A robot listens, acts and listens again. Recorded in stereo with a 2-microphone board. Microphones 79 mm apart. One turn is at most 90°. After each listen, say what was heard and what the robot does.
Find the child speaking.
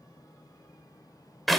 Keep listening.
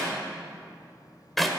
Keep listening.
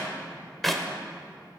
I can't make out a child speaking to turn to.